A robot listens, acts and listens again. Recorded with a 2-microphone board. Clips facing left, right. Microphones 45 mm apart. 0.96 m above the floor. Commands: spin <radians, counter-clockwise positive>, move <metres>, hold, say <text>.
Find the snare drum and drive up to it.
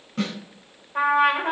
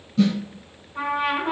spin 0.96
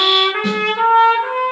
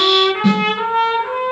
move 1.0
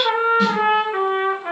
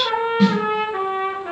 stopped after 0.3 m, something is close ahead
say Blocked. The snare drum is further on, straight ahead.